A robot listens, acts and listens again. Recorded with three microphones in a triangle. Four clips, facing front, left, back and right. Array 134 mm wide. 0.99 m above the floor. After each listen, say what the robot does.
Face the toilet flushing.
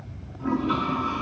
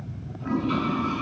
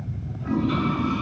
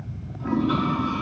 Turn 25° right.
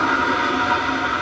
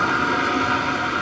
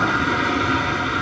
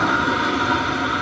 Turn 15° right.
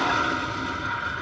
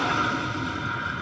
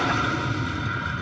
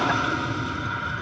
Facing the toilet flushing.